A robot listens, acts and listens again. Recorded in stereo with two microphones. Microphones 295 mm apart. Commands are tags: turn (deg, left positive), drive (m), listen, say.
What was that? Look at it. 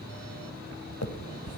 <turn deg="55"/>
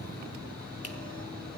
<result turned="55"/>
<listen/>
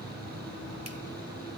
<listen/>
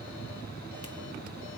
<say>I heard a finger snap, but can't make it out now. It was about straight ahead or 70° left.</say>